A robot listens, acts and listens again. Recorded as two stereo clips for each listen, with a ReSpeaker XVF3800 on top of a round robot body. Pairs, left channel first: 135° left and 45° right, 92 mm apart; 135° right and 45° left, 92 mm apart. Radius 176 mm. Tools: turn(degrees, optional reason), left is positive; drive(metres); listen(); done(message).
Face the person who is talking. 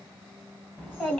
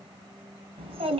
turn(degrees=60, reason="The child speaking: 60° left.")
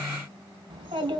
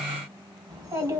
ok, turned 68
done("Found it: a child speaking, straight ahead.")